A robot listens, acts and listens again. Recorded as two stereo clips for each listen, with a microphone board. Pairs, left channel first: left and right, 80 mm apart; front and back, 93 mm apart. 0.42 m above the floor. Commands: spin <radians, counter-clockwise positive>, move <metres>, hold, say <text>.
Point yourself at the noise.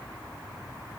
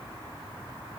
hold
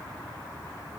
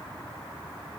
hold
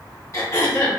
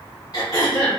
spin 0.61
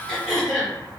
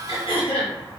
say Facing the throat clearing.